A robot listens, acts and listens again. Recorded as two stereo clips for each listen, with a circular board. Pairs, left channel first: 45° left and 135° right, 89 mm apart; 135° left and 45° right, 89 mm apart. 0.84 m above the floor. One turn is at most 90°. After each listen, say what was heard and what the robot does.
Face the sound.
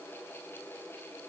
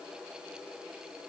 Keep listening.
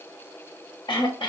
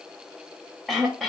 The throat clearing: 50° left. Turn 50° left.
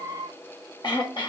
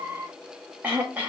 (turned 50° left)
The throat clearing is now 25° left. Turn 25° left.
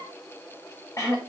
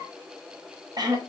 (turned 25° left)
Facing the throat clearing.